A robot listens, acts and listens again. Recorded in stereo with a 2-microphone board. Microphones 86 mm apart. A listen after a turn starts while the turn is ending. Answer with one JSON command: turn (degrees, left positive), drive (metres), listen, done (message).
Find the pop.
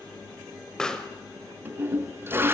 {"turn": 30}
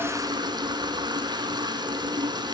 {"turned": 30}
{"listen": true}
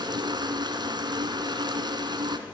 {"done": "I heard a pop, but can't make it out now. It was about 25° right or 145° left."}